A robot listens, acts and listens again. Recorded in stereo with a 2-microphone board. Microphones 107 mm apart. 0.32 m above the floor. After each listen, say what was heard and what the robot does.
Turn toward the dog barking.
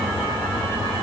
Keep listening.
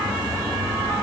Keep listening.
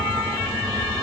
I can't make out a dog barking.